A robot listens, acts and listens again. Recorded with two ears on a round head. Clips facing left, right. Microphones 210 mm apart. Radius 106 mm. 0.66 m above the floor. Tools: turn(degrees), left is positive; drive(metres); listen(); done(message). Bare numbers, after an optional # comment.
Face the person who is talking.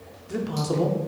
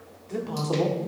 turn(30)
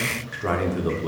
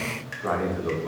# So it is at 135° left.
turn(135)
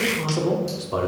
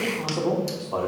# The man speaking is now 25° left.
turn(25)
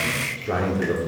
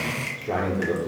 done("Facing the man speaking.")